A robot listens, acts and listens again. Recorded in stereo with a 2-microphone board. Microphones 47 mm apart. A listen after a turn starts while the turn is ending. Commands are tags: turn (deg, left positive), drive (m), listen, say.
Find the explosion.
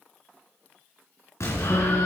<turn deg="75"/>
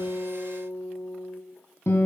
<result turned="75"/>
<listen/>
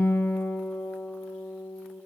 <say>I heard an explosion, but can't make it out now. It was about straight ahead or 30° left.</say>